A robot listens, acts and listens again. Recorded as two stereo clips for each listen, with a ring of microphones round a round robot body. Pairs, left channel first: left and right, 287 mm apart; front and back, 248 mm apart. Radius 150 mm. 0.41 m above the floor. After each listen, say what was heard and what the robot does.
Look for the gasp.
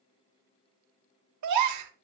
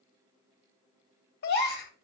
The gasp: 60° right. Turn 60° right.
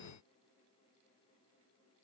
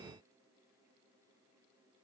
I heard a gasp from this way, but can't make it out now.